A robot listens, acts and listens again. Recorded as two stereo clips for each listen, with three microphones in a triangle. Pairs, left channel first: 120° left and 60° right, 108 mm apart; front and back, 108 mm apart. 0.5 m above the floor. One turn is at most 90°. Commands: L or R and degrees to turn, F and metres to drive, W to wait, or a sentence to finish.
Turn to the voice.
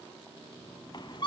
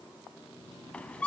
W
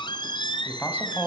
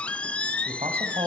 R90
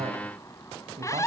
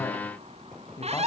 R60
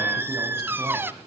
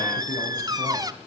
W
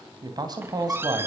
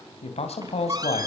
R10
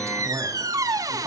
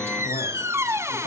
W
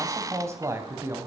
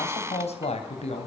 Found it: a man speaking, straight ahead, 2 to 4 m away.